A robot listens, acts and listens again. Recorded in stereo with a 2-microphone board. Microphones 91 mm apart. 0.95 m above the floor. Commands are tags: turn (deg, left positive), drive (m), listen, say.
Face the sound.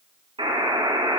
<turn deg="-90"/>
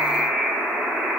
<turn deg="-15"/>
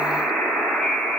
<say>Facing the buzzer.</say>